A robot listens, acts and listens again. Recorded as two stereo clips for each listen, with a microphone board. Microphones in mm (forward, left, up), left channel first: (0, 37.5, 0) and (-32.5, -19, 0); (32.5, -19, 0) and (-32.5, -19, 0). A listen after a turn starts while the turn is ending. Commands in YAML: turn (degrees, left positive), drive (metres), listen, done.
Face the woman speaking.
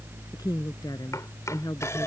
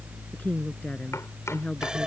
turn: 70
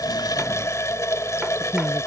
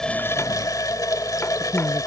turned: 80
done: "Facing the woman speaking."